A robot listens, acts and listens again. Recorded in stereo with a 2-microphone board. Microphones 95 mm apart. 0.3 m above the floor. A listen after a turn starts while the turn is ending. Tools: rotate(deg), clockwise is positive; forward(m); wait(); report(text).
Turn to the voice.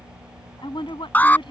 rotate(-60)
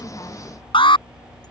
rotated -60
wait()
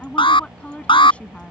rotate(-15)
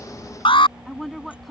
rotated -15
report("Facing the woman speaking.")